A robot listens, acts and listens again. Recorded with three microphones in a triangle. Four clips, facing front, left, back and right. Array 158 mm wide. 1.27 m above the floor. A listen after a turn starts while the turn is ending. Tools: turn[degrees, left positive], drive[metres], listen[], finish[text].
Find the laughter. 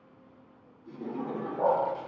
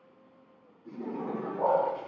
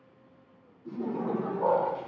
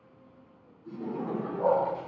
Thought: The laughter: 170° left.
Action: turn[170]
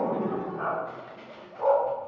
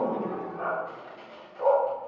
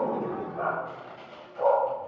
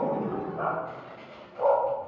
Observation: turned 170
Action: finish[Facing the laughter.]